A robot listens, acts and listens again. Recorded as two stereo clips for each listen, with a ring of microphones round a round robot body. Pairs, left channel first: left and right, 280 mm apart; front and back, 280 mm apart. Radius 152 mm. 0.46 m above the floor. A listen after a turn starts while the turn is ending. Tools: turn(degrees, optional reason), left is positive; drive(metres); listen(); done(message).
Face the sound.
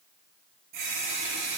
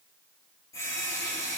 turn(degrees=-80, reason="The running tap: 80° right.")
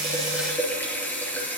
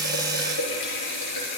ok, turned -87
done("Facing the running tap.")